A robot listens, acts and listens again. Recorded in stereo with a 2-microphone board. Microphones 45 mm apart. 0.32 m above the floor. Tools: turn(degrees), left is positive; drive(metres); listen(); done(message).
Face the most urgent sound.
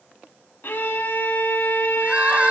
turn(degrees=-30)
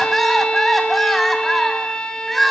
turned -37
done("Found it: crying, straight ahead.")